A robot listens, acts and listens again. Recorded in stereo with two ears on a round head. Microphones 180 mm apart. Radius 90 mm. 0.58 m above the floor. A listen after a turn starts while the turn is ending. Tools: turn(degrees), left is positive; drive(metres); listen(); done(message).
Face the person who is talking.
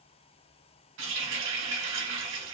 listen()
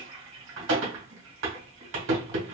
listen()
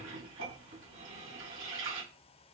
done("I can't make out anyone speaking to turn to.")